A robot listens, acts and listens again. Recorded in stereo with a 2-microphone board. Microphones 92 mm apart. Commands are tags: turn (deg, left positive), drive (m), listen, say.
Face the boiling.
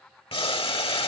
<turn deg="70"/>
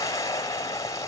<turn deg="35"/>
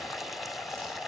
<say>Facing the boiling.</say>